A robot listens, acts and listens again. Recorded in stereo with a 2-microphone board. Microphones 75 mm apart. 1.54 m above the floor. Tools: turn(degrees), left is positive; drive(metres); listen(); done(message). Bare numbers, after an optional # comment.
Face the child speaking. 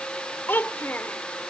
# The child speaking: about 25° left or 155° left.
turn(25)
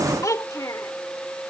# So it is at 130° left.
turn(130)
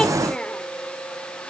listen()
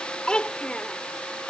# The child speaking is now 15° left.
turn(15)
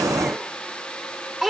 done("Found it: a child speaking, straight ahead.")